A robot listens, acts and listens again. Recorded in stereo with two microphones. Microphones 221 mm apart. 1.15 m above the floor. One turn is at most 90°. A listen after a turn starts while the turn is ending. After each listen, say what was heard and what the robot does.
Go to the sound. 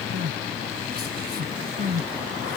The crying: about 45° right or 135° right. Turn 45° right.
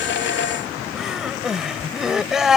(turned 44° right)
Drive 1.0 m forward.
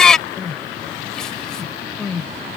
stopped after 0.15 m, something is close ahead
Blocked. The crying is further on, straight ahead.